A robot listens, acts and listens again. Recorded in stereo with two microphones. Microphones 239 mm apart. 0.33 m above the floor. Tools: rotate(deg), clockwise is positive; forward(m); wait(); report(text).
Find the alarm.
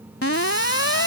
rotate(-65)
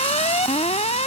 rotate(-30)
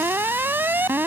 rotate(10)
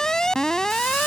report("Facing the alarm.")